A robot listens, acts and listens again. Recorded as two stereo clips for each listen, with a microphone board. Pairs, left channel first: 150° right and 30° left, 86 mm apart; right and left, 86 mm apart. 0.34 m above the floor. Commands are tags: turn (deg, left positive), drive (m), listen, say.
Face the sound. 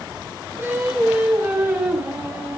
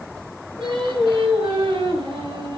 <turn deg="95"/>
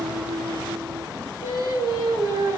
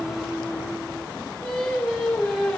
<say>Found it: singing, straight ahead.</say>